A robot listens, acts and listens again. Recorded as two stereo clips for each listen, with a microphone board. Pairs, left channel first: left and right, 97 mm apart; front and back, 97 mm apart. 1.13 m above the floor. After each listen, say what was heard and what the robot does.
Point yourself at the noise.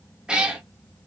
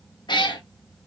The cat meowing: 10° right. Turn 10° right.
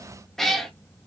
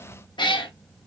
Facing the cat meowing, under 1 m away.